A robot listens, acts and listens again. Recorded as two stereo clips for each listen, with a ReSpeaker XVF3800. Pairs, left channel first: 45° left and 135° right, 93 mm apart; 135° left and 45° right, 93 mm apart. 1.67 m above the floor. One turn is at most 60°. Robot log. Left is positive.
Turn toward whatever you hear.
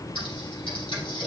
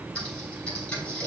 note: The typing on a keyboard: 55° left.
cmd yaw +55
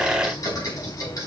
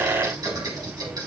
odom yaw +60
end: Found it: typing on a keyboard, straight ahead.